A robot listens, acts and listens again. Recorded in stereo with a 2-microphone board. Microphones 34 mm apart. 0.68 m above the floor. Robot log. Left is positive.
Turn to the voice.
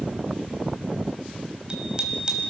cmd idle
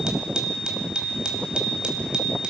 cmd idle
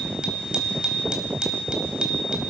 end: I can't make out anyone speaking to turn to.